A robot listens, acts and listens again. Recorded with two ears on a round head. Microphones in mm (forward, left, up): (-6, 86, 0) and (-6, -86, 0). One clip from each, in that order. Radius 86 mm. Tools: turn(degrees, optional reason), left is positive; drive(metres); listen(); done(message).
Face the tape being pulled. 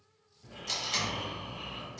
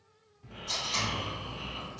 turn(degrees=40, reason="The tape being pulled: about 40° left or 140° left.")
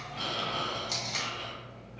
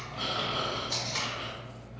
turn(degrees=100, reason="So it is at 100° left.")
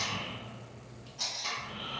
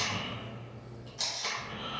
turn(degrees=-20, reason="The tape being pulled is now 20° right.")
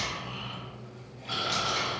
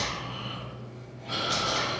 listen()
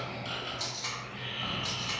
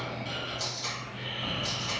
done("Facing the tape being pulled.")